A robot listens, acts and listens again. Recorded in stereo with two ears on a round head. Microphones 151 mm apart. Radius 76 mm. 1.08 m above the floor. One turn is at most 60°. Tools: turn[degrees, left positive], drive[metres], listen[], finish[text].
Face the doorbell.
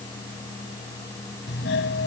Action: turn[60]
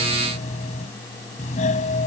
Thought: So it is at 45° left.
Action: turn[45]
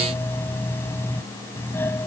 Thought: The doorbell is now 15° left.
Action: turn[15]
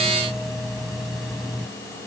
Action: finish[Found it: a doorbell, straight ahead.]